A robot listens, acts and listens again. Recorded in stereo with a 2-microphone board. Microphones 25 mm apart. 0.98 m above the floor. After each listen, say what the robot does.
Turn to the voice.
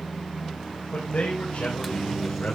Turn 90° left.
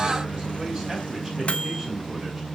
Keep listening.
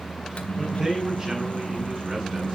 Turn 20° right.
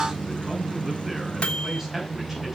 Keep listening.
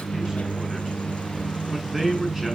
Facing the man speaking.